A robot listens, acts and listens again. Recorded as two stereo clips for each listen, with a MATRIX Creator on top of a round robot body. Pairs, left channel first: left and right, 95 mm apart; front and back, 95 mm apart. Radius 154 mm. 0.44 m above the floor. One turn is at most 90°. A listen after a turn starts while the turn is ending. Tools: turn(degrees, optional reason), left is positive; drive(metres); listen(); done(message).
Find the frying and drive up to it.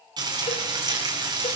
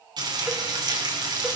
turn(degrees=-90, reason="The frying: 135° right.")
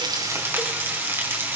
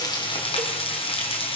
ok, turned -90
turn(degrees=-20, reason="The frying is now 20° right.")
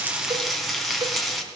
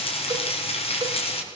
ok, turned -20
drive(metres=1.0)
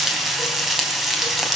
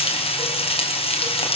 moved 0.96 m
drive(metres=1.0)
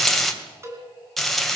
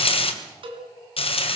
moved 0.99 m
drive(metres=1.0)
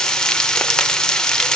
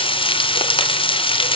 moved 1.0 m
turn(degrees=10, reason="The frying is now 10° left.")
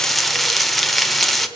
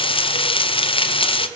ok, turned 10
drive(metres=1.0)
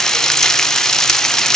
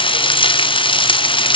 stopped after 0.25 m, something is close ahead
done("Arrived at the frying, straight ahead.")